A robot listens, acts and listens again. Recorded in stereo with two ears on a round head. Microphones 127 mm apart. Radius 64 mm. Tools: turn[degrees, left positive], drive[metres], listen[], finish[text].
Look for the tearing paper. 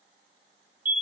Action: listen[]
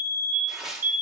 Action: turn[-30]
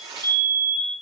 Thought: So it is at 145° right.
Action: turn[-145]
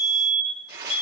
Thought: The tearing paper is now 30° right.
Action: turn[-30]
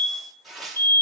Action: finish[Found it: tearing paper, straight ahead, 1 to 2 m away.]